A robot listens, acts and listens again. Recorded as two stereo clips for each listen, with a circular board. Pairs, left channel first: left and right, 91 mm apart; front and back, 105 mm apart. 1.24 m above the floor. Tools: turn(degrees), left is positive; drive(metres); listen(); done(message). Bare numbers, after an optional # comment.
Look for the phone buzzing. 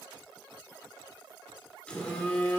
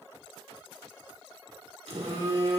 # The phone buzzing: 165° left.
turn(165)
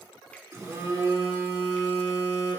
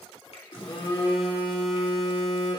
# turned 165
# The phone buzzing is now 35° right.
turn(-35)
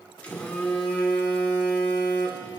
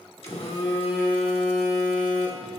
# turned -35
# The phone buzzing is now 15° left.
turn(15)
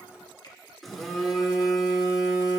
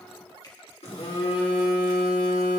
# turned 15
done("Found it: a phone buzzing, straight ahead.")